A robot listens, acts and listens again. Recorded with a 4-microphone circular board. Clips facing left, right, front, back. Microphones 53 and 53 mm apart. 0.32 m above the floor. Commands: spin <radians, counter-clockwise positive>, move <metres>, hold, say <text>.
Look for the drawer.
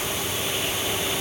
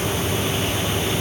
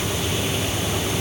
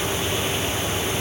hold
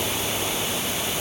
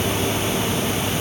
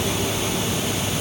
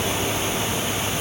hold
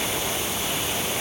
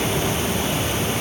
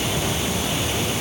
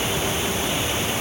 say I can't make out a drawer.